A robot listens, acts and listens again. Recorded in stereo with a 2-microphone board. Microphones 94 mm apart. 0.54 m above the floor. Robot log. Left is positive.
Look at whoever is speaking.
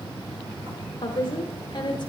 note: The woman speaking: about 50° left or 130° left.
cmd yaw +50
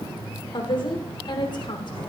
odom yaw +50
note: So it is at 65° left.
cmd yaw +65
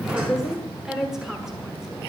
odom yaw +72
end: Facing the woman speaking.